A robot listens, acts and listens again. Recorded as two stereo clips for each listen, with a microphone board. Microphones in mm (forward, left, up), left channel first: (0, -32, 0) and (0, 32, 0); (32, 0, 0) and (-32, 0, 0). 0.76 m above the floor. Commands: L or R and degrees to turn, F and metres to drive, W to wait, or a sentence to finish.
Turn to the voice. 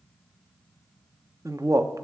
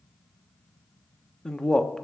L80
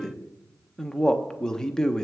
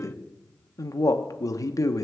R15
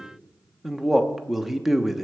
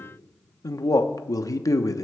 Facing the man speaking.